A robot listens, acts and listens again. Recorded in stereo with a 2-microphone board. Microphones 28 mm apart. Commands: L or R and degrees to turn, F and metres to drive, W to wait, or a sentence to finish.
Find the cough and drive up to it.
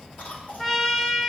L70
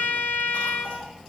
W
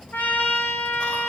W
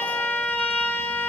I heard a cough, but can't make it out now. It was about straight ahead or 40° left. I did not reach it.